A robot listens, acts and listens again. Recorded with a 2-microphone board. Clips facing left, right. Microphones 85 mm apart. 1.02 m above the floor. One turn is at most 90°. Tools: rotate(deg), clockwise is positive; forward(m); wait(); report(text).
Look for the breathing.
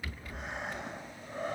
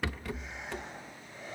rotate(-55)
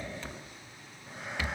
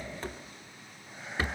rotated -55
rotate(-65)
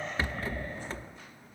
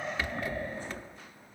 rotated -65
report("Found it: breathing, straight ahead.")